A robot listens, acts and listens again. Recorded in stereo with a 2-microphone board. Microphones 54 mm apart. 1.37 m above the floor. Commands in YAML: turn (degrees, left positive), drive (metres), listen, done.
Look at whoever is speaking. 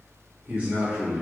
turn: -30
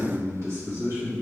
turn: -120
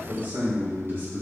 turn: -40
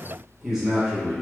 turn: -10
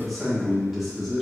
done: "Facing the man speaking, 1 to 2 m away."